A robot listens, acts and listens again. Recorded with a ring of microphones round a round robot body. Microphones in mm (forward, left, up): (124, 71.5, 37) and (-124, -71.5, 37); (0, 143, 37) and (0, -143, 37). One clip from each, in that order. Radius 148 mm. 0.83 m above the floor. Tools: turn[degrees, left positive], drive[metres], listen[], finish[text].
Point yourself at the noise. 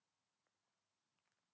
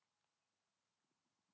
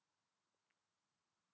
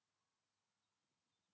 Action: listen[]
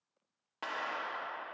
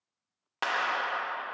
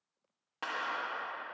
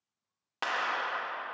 Thought: The clap: 135° right.
Action: turn[-135]
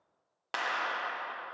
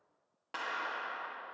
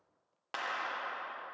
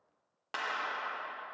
Action: finish[Facing the clap.]